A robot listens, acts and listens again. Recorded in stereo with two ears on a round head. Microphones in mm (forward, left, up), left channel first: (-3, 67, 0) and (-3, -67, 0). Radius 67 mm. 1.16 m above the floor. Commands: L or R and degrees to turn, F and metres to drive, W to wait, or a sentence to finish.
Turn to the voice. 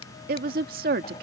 R70
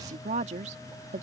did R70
R45
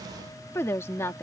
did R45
L20
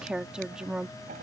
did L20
Found it: a woman speaking, straight ahead.